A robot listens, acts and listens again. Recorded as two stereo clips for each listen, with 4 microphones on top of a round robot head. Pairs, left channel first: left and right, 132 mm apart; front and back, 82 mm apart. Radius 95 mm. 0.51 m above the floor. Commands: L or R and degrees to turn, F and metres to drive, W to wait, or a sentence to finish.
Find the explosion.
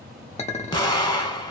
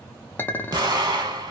L145
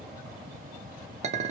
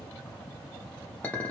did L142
I heard an explosion from this way, but can't make it out now.